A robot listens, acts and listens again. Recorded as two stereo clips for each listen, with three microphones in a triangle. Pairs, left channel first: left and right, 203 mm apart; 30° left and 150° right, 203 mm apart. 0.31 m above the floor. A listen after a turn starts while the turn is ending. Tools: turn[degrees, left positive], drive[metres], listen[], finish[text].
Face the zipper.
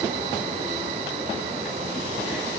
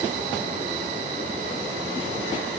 Action: listen[]
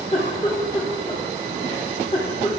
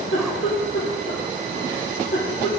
Action: listen[]
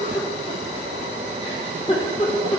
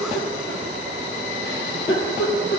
Action: finish[I can't make out a zipper, only a giggle.]